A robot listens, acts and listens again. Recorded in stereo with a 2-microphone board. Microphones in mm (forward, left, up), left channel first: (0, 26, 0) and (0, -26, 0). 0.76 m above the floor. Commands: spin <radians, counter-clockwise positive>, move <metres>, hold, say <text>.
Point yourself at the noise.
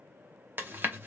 spin -0.79
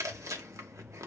spin -1.57
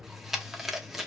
say Facing the chewing, under 1 m away.